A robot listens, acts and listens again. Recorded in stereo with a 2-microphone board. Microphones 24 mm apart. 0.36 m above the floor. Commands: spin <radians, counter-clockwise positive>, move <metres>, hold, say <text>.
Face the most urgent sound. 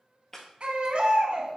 spin -0.79
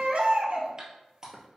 spin -1.48
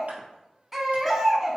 spin -0.26
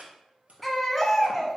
say Facing the baby crying.